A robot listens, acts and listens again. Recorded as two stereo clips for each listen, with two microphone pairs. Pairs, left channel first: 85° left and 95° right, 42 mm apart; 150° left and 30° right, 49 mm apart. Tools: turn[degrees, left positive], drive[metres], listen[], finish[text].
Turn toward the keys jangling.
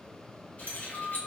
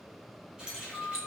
Thought: The keys jangling: 45° left.
Action: turn[45]
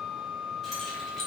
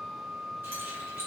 Action: finish[Found it: keys jangling, straight ahead, under 1 m away.]